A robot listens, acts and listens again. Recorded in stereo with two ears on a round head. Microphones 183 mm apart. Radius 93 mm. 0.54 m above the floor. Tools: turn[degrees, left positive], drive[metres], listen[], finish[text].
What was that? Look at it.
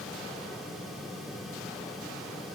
Action: listen[]
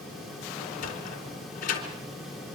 Thought: The sliding door: about 40° left or 140° left.
Action: turn[40]
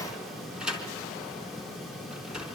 Action: finish[Found it: a sliding door, straight ahead.]